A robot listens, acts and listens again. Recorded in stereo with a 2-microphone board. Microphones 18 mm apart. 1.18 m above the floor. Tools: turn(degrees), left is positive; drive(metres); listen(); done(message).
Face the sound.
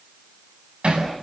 turn(degrees=-90)
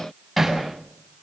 done("Found it: hammering, straight ahead.")